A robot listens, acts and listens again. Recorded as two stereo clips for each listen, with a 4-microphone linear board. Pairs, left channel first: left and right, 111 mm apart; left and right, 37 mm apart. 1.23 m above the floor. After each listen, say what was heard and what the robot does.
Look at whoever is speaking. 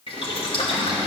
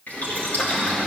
Keep listening.
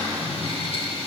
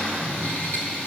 Keep listening.
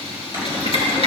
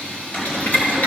I can't make out anyone speaking, only boiling and a cupboard door.